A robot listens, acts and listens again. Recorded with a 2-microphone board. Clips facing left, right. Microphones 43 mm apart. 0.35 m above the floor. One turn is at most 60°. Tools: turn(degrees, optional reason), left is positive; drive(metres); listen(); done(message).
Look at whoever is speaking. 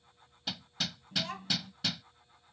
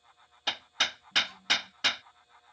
turn(degrees=60, reason="The child speaking: about 65° left or 115° left.")
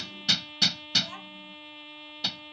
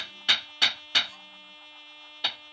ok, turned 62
turn(degrees=45, reason="So it is at 45° left.")
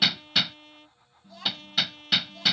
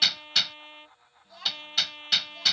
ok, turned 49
done("Found it: a child speaking, straight ahead.")